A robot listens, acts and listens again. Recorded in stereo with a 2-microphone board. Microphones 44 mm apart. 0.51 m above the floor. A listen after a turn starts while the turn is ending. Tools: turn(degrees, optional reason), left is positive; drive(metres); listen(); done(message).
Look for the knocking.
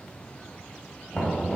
turn(degrees=30)
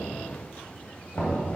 turn(degrees=140, reason="So it is at 140° left.")
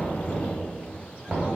turn(degrees=-10, reason="The knocking is now 10° right.")
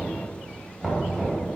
done("Facing the knocking.")